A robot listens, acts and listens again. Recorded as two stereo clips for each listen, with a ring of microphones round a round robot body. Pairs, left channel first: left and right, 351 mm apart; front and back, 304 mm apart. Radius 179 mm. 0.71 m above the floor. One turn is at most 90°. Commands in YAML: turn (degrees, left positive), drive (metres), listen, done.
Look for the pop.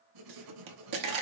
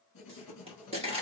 turn: -90
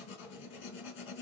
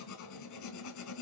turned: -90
turn: -20
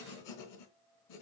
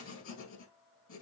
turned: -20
done: "Facing where the pop came from. I can't hear it now."